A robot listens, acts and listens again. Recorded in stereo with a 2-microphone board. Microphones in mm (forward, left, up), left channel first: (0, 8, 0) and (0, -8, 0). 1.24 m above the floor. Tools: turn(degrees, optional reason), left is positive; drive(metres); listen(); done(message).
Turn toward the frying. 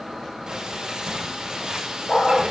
turn(degrees=-60, reason="The frying: about 60° right or 120° right.")
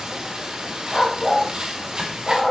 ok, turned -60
turn(degrees=-60, reason="So it is at 60° right.")
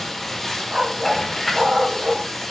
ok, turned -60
turn(degrees=20, reason="The frying is now 20° left.")
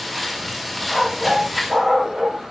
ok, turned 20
done("Found it: frying, straight ahead, over 4 m away.")